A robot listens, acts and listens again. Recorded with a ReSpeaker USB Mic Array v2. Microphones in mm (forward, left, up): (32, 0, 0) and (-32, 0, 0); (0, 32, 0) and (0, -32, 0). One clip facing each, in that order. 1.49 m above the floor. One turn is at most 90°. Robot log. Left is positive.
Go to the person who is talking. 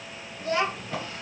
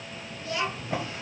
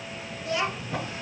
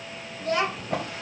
note: The child speaking: 50° right.
cmd yaw -50
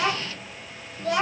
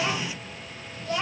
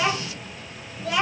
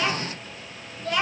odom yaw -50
cmd fwd 1.0
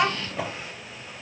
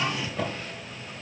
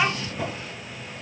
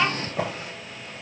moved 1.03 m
note: The child speaking is now 10° left.
cmd yaw +10
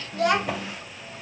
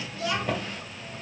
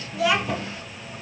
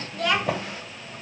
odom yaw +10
cmd fwd 1.0
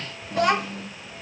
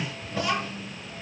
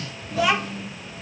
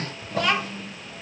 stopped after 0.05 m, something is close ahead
end: I am next to the child speaking.